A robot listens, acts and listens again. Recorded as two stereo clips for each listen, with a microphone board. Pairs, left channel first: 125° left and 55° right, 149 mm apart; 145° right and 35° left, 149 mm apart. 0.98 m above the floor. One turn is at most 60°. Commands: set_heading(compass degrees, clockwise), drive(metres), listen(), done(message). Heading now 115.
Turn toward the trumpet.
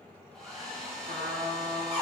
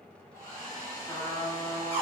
set_heading(170)
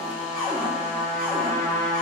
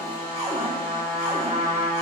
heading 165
done("Facing the trumpet.")